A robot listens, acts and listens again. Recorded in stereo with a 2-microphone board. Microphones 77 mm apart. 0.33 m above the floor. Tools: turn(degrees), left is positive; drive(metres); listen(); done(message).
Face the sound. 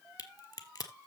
turn(degrees=50)
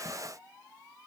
listen()
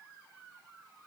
done("I heard a crack, but can't make it out now. It was about straight ahead or 80° left.")